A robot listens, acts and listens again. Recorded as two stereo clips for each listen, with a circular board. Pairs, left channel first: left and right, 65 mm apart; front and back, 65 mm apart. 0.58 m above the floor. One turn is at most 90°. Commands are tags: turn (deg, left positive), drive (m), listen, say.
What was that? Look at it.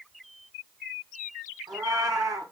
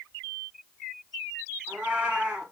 <turn deg="-90"/>
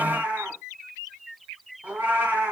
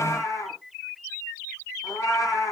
<turn deg="-25"/>
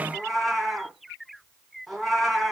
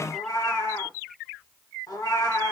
<say>Found it: a cat meowing, straight ahead, 2 to 4 m away.</say>